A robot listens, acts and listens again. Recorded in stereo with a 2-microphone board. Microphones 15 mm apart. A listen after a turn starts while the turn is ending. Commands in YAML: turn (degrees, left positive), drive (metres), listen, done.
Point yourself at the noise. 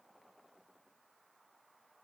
listen: true
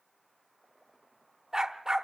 turn: -30
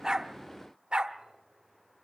turn: -115
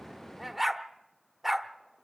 done: "Facing the dog barking."